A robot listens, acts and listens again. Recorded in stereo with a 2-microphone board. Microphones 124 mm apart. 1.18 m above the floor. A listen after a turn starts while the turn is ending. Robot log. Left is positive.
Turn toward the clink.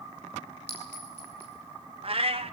note: The clink: about 15° right or 165° right.
cmd yaw -15
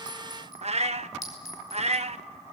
end: Found it: a clink, straight ahead.